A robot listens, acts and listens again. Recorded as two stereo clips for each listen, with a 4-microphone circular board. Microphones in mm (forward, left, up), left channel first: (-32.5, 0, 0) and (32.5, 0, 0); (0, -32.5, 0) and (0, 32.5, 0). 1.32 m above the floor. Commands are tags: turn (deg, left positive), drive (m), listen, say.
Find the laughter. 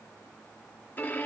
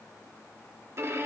<listen/>
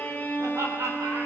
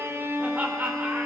<turn deg="25"/>
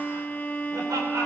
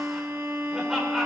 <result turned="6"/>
<turn deg="10"/>
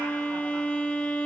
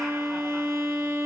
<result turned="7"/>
<listen/>
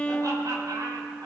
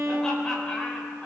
<turn deg="-15"/>
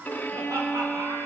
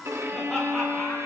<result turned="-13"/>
<listen/>
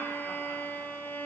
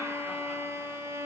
<listen/>
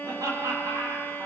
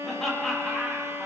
<say>Facing the laughter, over 4 m away.</say>